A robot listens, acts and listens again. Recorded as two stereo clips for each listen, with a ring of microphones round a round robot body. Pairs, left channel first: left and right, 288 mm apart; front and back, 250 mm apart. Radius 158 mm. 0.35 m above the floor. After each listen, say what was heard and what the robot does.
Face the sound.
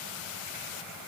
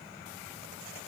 Keep listening.
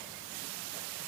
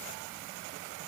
Keep listening.
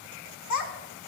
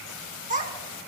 The child speaking: 120° left. Turn 120° left.
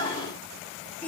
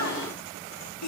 Facing the child speaking, 2 to 4 m away.